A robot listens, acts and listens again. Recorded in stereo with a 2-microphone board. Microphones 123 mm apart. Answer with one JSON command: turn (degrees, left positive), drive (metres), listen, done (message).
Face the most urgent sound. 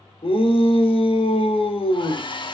{"turn": 55}
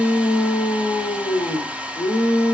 {"turn": 65}
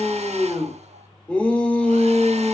{"done": "Found it: a shout, straight ahead, 2 to 4 m away."}